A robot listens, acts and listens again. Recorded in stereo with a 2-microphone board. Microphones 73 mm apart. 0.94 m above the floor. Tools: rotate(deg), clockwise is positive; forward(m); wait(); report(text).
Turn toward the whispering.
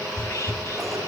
rotate(-45)
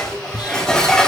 rotate(-85)
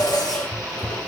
rotate(-15)
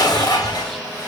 wait()
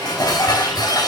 wait()
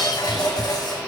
report("Facing where the whispering came from. I can't hear it now.")